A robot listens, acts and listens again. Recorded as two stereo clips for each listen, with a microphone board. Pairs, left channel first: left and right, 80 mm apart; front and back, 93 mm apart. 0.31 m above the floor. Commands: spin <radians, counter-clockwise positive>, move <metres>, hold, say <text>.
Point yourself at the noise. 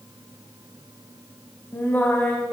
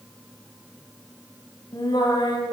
spin 0.35
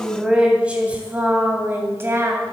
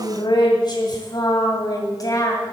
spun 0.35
spin -0.79
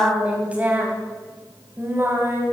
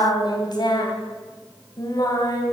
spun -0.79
spin -0.61
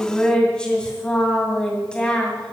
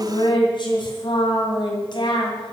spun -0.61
spin 0.26
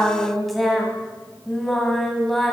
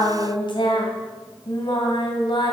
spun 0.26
say Facing the singing, 2 to 4 m away.